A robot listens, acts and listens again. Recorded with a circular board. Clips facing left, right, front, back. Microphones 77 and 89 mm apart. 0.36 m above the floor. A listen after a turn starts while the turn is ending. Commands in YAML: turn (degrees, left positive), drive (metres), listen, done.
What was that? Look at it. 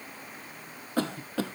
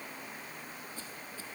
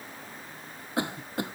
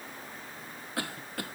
turn: 70
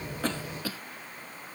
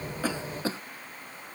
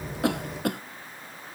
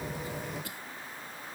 turn: -30
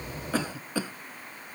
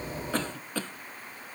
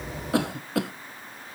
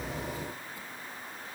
turn: 10
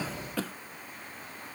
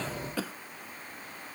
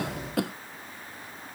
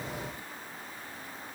done: "Facing the cough."